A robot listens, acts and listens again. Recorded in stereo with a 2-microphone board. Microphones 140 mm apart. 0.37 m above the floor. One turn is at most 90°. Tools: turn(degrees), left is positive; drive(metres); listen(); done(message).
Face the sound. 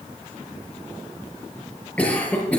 turn(degrees=30)
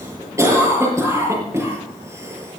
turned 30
turn(degrees=-20)
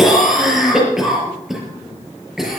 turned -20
done("Facing the cough.")